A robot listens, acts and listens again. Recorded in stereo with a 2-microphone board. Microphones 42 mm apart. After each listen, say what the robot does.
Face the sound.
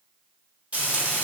Turn 30° right.
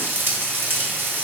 Turn 115° right.
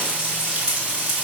Turn 30° right.
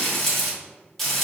Found it: frying, straight ahead, 1 to 2 m away.